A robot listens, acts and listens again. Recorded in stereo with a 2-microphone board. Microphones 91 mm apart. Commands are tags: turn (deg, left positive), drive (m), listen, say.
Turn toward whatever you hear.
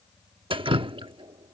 <turn deg="-70"/>
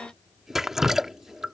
<say>Found it: dripping, straight ahead.</say>